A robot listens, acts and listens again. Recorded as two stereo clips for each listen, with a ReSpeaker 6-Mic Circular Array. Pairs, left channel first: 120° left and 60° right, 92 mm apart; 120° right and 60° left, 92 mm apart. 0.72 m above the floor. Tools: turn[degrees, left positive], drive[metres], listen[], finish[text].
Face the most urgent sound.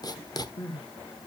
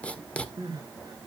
Thought: The crying: 105° left.
Action: turn[105]
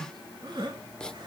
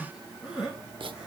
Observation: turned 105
Thought: The crying is now 20° right.
Action: turn[-20]
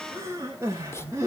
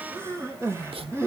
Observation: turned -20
Action: finish[Found it: crying, straight ahead.]